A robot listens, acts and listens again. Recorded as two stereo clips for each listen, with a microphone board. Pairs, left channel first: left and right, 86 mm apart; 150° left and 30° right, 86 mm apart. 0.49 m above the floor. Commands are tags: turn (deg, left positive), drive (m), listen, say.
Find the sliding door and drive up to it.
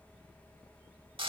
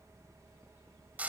<listen/>
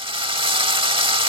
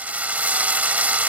<listen/>
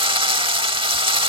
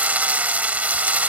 <say>I can't make out a sliding door, only a drill.</say>